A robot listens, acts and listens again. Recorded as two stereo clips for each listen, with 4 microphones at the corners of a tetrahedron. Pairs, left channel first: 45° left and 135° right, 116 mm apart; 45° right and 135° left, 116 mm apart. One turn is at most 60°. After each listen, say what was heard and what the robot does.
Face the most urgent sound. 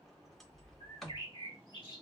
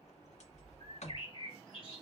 Keep listening.
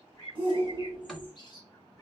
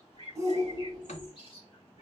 The shout: 170° right. Turn 60° right.
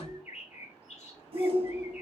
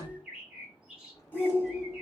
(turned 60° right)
The shout is now 115° right. Turn 60° right.
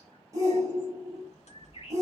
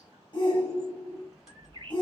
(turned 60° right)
The shout is now 80° right. Turn 60° right.
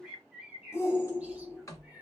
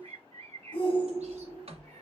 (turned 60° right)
The shout is now 20° right. Turn 20° right.
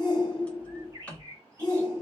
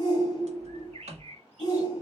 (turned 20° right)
Facing the shout.